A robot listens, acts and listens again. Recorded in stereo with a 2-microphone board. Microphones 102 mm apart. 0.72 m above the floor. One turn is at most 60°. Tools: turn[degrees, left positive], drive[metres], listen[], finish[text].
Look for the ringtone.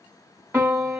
Action: listen[]
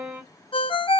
Thought: The ringtone: about 60° left or 120° left.
Action: turn[60]
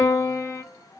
Action: listen[]
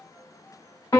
Action: listen[]
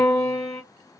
Action: finish[I heard a ringtone, but can't make it out now. It was about straight ahead or 60° left.]